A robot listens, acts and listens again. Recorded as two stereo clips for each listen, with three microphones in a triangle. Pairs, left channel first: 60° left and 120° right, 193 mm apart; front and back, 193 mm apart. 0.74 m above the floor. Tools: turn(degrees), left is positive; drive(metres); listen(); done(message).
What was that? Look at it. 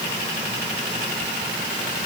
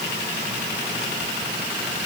listen()
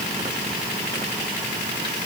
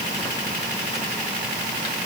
listen()
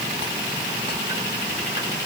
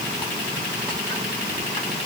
done("I can't make out anything to turn to.")